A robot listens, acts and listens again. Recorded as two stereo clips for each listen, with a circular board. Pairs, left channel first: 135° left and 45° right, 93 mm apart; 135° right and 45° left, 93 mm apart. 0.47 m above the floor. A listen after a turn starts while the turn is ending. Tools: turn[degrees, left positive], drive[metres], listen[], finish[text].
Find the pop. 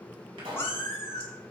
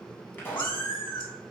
Thought: The pop: 65° right.
Action: turn[-65]
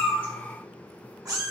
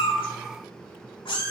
Action: finish[I heard a pop from this way, but can't make it out now.]